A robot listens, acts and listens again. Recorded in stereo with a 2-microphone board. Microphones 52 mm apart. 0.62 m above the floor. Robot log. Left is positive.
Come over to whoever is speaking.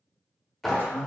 note: The man speaking: about 35° left or 145° left.
cmd yaw +35
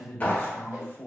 note: So it is at 105° left.
cmd yaw +105
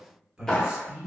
note: The man speaking is now 25° right.
cmd yaw -25
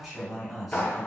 cmd fwd 1.0
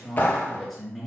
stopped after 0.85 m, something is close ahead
end: Arrived at the man speaking, straight ahead.